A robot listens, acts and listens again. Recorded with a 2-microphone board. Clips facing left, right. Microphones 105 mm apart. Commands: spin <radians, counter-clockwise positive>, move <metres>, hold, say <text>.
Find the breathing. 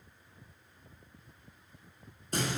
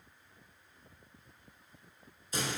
hold
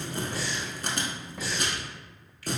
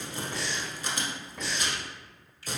spin 0.52
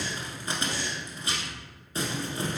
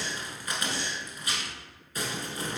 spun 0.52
spin -0.52
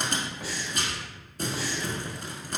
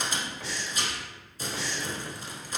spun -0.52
spin 0.17
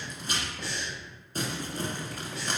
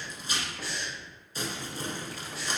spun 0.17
say Facing the breathing, under 1 m away.